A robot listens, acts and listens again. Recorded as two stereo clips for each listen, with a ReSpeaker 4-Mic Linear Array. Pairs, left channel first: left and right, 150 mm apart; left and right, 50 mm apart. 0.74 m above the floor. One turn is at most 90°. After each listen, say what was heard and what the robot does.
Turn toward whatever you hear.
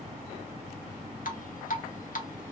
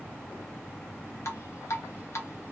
The dripping: about 65° left or 115° left. Turn 65° left.
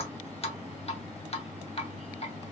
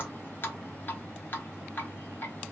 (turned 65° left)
So it is at 45° left. Turn 45° left.
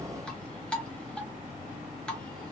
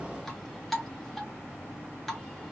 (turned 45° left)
Found it: dripping, straight ahead.